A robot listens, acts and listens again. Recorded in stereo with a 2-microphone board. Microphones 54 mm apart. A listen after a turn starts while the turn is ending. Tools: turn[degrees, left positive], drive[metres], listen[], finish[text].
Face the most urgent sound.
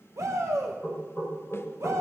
Thought: The shout: about 70° right or 110° right.
Action: turn[-70]
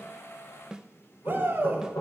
Thought: So it is at 40° right.
Action: turn[-40]
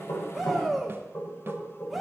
Action: finish[Found it: a shout, straight ahead, 2 to 4 m away.]